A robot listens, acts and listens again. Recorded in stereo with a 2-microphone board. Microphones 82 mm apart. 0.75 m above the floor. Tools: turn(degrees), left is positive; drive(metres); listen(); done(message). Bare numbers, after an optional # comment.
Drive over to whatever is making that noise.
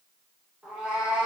turn(-30)
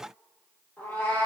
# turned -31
# So it is at 20° left.
turn(20)
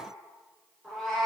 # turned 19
drive(1.0)
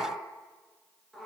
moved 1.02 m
drive(1.0)
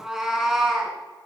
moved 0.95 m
drive(1.0)
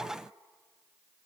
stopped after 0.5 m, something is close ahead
listen()
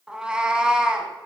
# The cat meowing is now 10° right.
turn(-10)
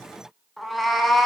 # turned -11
done("Arrived at the cat meowing, straight ahead.")